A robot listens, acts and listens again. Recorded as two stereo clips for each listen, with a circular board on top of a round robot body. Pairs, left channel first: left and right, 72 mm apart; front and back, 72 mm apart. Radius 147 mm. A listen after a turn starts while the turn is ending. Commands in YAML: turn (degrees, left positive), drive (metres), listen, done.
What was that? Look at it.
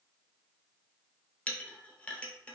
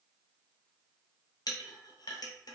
turn: 20
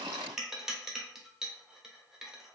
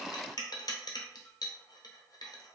done: "Facing the clink."